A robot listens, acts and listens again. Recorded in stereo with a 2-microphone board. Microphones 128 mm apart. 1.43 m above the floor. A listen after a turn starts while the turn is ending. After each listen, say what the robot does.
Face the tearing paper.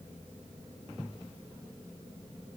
Keep listening.
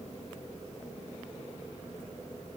Keep listening.
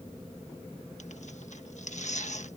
Turn 65° left.
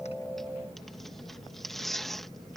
Facing the tearing paper.